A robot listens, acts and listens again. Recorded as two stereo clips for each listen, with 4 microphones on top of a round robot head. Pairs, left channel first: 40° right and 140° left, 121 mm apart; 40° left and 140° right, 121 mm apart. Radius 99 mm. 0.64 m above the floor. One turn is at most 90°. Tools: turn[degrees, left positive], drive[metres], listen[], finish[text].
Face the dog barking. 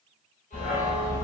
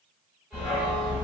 Thought: The dog barking: 35° right.
Action: turn[-35]
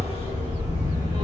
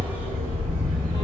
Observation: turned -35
Thought: The dog barking is now 10° right.
Action: turn[-10]
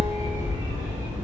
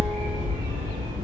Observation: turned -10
Thought: The dog barking is now 25° right.
Action: turn[-25]
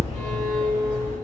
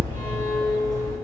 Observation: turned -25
Thought: The dog barking is now 25° right.
Action: turn[-25]
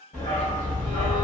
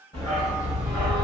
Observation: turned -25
Thought: The dog barking is now 30° right.
Action: turn[-30]
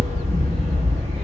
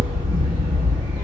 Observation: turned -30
Thought: The dog barking is now 10° right.
Action: turn[-10]
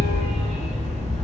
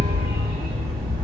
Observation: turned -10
Action: finish[Facing the dog barking, 1 to 2 m away.]